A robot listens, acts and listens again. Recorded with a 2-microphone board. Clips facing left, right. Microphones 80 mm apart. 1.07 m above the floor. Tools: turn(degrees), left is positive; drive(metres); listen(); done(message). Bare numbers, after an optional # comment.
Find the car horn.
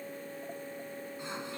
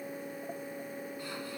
listen()
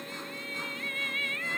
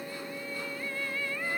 listen()
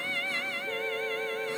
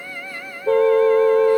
turn(-90)
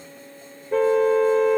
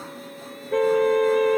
done("Facing the car horn.")